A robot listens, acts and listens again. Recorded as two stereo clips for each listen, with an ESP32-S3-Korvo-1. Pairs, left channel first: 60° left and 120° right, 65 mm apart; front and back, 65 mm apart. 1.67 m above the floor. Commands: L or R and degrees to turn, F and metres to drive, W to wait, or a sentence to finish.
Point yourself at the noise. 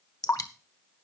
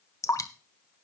L35
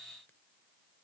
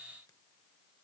W
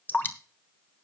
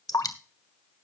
Found it: dripping, straight ahead.